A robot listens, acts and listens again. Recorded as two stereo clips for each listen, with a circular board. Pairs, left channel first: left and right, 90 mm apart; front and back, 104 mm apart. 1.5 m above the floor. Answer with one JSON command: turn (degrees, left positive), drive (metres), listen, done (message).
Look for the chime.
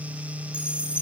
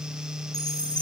{"turn": -170}
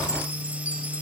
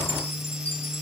{"listen": true}
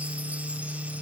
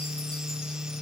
{"listen": true}
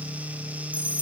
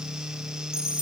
{"turn": -15}
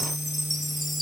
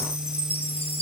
{"done": "Facing the chime."}